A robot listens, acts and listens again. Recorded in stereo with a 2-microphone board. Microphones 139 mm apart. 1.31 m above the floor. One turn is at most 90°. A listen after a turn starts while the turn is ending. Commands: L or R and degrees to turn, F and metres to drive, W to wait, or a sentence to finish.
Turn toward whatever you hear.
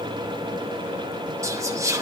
R20
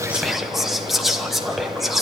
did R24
Found it: whispering, straight ahead.